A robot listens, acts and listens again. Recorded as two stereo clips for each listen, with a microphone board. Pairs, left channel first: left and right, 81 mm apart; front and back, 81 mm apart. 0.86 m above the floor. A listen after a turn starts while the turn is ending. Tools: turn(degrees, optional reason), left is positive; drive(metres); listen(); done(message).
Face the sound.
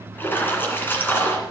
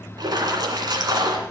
turn(degrees=155, reason="The splash: 155° left.")
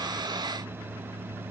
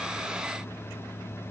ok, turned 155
done("Facing where the splash came from. I can't hear it now.")